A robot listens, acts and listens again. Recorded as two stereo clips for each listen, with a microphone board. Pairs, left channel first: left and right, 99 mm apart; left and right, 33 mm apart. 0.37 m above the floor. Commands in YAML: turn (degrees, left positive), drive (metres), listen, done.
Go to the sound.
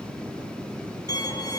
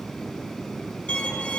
turn: 40
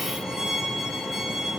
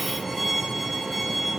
drive: 1.0
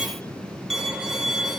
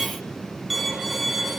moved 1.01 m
drive: 1.0
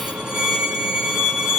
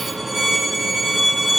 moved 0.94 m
drive: 1.0
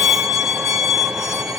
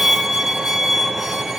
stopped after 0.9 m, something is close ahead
turn: -10
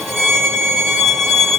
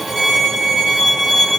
done: "Arrived at the violin, straight ahead."